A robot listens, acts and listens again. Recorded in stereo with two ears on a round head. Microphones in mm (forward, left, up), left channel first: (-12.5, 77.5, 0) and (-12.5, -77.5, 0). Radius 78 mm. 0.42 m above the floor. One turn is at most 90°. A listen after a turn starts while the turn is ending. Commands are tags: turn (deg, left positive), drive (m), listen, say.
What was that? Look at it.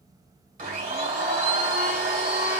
<turn deg="-45"/>
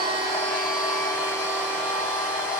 <say>Facing the blender.</say>